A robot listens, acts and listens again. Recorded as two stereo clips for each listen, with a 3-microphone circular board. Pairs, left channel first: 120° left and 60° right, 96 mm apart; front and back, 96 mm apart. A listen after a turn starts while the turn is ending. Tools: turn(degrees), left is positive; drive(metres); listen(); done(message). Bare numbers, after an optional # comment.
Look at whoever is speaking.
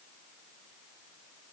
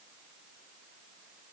listen()
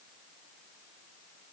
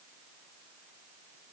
listen()
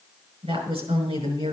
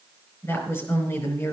# The woman speaking: 65° right.
turn(-65)
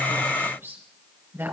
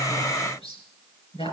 done("Facing the woman speaking.")